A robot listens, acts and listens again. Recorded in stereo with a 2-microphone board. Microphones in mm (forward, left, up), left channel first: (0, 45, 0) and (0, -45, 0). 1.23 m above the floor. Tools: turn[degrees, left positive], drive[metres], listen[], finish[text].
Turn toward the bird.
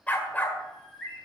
Action: turn[30]
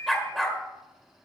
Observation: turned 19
Thought: So it is at 150° left.
Action: turn[150]
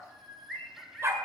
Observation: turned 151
Action: finish[Facing the bird, over 4 m away.]